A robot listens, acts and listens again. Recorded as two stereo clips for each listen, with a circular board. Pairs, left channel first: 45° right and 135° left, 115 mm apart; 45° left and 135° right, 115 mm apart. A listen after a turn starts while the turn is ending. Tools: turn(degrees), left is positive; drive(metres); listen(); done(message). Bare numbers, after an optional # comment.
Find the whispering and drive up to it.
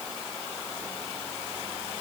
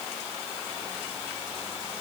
listen()
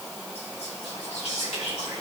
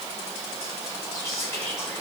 # The whispering: 20° right.
turn(-20)
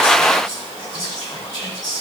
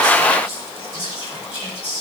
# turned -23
drive(1.0)
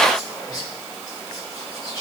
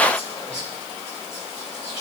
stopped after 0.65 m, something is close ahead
# The whispering is now 10° left.
turn(10)
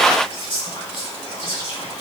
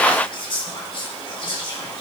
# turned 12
done("Blocked. The whispering is further on, straight ahead.")